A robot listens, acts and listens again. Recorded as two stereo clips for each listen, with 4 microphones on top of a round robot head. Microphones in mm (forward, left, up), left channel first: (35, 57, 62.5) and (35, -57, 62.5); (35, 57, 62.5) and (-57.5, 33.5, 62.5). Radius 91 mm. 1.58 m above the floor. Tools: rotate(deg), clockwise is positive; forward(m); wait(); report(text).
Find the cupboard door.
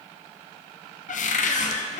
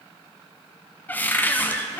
rotate(-85)
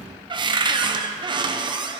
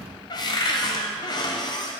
rotate(40)
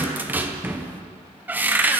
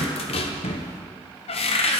rotate(15)
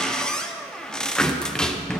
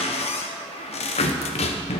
report("Found it: a cupboard door, straight ahead.")